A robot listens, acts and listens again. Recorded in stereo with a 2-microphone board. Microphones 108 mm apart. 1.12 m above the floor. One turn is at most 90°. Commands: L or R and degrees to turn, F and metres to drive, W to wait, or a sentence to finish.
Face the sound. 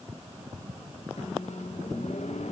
L90
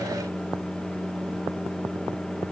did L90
Found it: a microwave, straight ahead.